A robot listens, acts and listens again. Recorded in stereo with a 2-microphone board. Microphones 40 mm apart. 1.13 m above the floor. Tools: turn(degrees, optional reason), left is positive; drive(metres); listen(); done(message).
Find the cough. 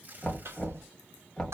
turn(degrees=-90)
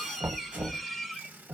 done("Found it: a cough, straight ahead.")